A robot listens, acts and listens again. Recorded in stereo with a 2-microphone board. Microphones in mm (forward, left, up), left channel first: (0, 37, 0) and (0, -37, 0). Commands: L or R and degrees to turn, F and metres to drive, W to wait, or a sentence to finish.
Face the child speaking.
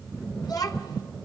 L65
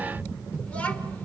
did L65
L20
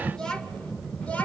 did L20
L20
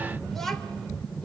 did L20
Facing the child speaking.